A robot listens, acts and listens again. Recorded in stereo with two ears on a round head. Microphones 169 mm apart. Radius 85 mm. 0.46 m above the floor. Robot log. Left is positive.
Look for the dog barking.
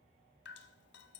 cmd idle
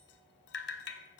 cmd idle
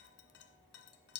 end: I can't make out a dog barking to turn to.